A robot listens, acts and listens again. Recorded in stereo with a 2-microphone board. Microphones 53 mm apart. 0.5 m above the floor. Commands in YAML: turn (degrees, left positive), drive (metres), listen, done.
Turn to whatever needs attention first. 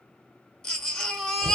turn: 30
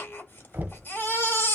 turn: 140
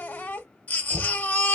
turn: 35
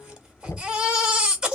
turn: -15
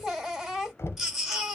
done: "Found it: a baby crying, straight ahead."